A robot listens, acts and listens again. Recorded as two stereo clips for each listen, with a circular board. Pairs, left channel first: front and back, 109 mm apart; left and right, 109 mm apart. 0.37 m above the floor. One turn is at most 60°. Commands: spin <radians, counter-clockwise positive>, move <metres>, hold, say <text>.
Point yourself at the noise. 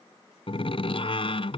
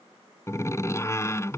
spin 0.44
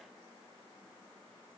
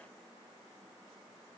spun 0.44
say I heard a door slam from this way, but can't make it out now.